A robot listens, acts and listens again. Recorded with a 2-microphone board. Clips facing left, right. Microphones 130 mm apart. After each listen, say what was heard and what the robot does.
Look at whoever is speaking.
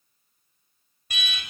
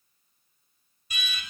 Keep listening.
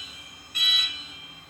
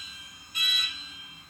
Keep listening.
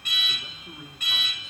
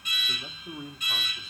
The man speaking: about 35° right or 145° right. Turn 35° right.
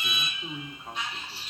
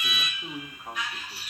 So it is at 10° right. Turn 10° right.
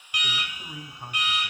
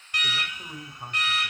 Found it: a man speaking, straight ahead.